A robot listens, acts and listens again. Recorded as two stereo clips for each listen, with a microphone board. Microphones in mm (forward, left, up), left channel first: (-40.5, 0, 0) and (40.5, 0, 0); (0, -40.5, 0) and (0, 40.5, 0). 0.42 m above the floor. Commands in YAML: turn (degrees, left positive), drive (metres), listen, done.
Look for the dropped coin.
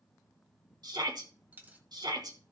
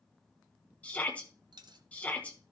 turn: 70
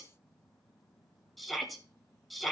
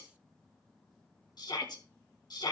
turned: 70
done: "I heard a dropped coin from this way, but can't make it out now."